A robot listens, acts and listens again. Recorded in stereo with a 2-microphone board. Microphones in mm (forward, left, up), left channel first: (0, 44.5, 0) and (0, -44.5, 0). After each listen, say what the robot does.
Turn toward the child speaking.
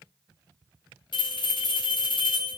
Keep listening.
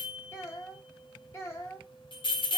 Turn 30° left.
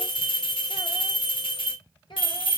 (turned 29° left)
Turn 120° left.
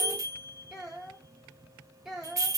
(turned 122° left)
Facing the child speaking, 2 to 4 m away.